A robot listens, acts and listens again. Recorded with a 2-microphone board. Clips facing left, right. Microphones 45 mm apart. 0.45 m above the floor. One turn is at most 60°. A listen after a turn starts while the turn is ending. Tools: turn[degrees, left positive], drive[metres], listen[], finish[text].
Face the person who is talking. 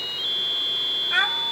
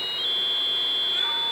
Thought: The child speaking: about 70° left or 110° left.
Action: turn[60]
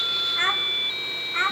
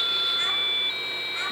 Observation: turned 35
Thought: So it is at 35° left.
Action: turn[35]
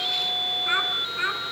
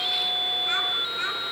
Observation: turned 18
Thought: The child speaking is now 15° left.
Action: turn[15]
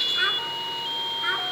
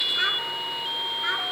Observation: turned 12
Action: finish[Found it: a child speaking, straight ahead, 2 to 4 m away.]